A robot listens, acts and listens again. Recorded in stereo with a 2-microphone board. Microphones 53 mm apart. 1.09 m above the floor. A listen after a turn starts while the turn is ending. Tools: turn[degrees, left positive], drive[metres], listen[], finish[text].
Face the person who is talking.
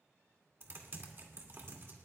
Action: listen[]
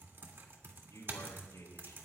Thought: The man speaking: about 70° left or 110° left.
Action: turn[70]
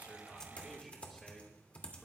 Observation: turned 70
Action: finish[Found it: a man speaking, straight ahead.]